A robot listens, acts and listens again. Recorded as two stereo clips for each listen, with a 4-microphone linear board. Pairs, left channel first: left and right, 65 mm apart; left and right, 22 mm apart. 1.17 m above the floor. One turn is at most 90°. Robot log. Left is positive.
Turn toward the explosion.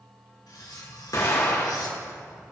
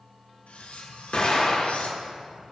note: The explosion: about 55° left or 125° left.
cmd yaw +55
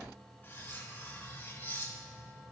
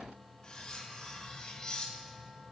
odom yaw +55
cmd idle
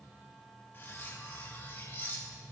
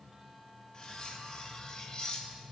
end: I heard an explosion, but can't make it out now. It was about straight ahead or 70° left.